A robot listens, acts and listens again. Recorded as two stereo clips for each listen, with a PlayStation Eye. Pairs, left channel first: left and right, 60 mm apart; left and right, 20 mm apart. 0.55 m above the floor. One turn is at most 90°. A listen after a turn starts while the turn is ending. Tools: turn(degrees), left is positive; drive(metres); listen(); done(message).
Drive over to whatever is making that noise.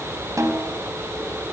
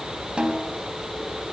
turn(degrees=-65)
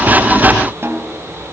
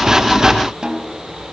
turn(degrees=-45)
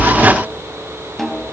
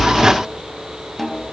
drive(metres=1.0)
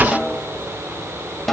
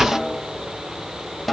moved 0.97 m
drive(metres=1.0)
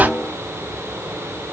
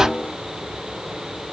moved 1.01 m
drive(metres=1.0)
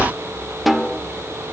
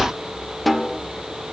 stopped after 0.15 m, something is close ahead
done("Arrived at the snare drum, straight ahead.")